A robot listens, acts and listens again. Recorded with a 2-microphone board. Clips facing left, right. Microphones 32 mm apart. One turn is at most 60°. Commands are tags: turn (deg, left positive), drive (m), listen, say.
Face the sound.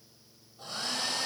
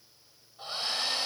<turn deg="-30"/>
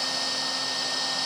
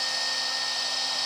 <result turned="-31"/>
<say>Facing the hair dryer, over 4 m away.</say>